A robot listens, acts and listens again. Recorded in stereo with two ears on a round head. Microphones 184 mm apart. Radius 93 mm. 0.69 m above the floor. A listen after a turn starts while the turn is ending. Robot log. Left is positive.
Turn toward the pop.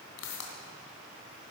cmd yaw +90
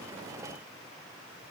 end: I heard a pop from this way, but can't make it out now.